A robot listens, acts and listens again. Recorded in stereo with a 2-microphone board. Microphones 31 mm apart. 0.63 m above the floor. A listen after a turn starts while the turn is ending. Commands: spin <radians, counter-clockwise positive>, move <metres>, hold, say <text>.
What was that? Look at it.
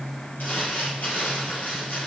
spin 1.57
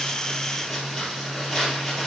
say Facing the crumpling.